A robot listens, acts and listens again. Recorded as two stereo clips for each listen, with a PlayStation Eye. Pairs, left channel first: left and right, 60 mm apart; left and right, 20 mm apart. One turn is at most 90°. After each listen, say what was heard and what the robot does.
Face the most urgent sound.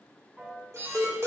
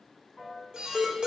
The alarm: about 55° right or 125° right. Turn 55° right.
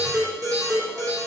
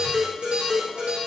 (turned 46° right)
So it is at 80° right. Turn 80° right.
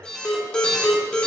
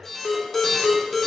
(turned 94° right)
The alarm is now 15° left. Turn 15° left.
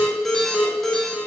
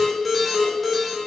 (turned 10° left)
Facing the alarm, 2 to 4 m away.